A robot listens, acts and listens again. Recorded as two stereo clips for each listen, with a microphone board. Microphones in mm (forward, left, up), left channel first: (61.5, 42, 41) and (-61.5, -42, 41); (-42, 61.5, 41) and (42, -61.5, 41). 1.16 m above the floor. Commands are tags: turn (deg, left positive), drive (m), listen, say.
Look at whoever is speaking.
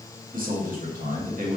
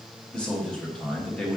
<turn deg="-150"/>
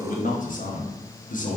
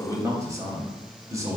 <turn deg="15"/>
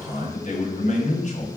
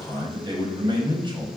<say>Facing the man speaking.</say>